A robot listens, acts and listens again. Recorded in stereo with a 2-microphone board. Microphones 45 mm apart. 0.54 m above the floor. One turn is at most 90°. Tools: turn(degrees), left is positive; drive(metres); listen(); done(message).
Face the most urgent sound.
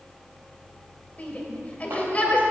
turn(degrees=30)
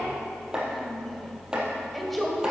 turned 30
done("Found it: a shout, straight ahead.")